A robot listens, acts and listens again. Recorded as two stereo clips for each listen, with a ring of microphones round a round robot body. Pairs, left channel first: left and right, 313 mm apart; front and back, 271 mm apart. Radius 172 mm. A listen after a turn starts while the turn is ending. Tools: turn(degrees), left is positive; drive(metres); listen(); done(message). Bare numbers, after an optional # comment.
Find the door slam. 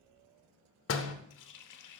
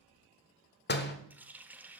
# The door slam: 50° left.
turn(50)
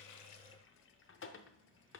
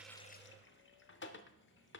done("I heard a door slam from this way, but can't make it out now.")